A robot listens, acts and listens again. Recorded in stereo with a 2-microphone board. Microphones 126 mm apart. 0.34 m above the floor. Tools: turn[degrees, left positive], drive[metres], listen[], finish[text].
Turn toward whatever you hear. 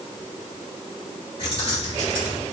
Thought: The keys jangling: about 45° left or 135° left.
Action: turn[45]
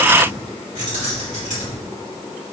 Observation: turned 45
Thought: So it is at 100° left.
Action: turn[100]
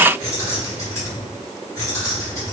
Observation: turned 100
Thought: The keys jangling is now 30° left.
Action: turn[30]
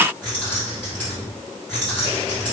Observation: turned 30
Thought: The keys jangling is now 10° left.
Action: turn[10]
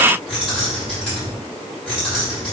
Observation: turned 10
Action: finish[Facing the keys jangling.]